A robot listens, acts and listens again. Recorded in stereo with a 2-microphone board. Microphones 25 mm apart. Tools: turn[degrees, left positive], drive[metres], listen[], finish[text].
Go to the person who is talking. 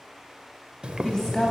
Thought: The woman speaking: about 25° left or 155° left.
Action: turn[25]
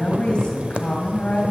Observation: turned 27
Thought: So it is at 125° left.
Action: turn[125]
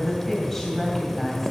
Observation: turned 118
Thought: The woman speaking is now 10° left.
Action: turn[10]
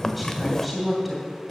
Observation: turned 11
Action: drive[1.0]
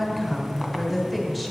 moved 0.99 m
Action: drive[1.0]
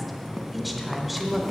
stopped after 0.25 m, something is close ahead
Action: finish[I am next to the woman speaking.]